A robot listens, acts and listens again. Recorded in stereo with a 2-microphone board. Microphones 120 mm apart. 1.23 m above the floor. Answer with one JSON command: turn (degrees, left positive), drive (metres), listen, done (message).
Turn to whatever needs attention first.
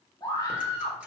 {"turn": 30}
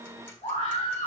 {"turn": 120}
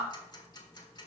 {"turn": -10}
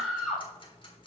{"done": "Found it: a scream, straight ahead."}